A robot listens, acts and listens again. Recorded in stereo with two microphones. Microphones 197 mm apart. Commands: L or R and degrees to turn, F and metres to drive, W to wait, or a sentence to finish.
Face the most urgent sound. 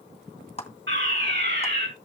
R70
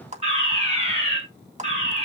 R35
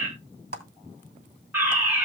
R10
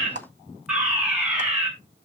Facing the fire alarm, over 4 m away.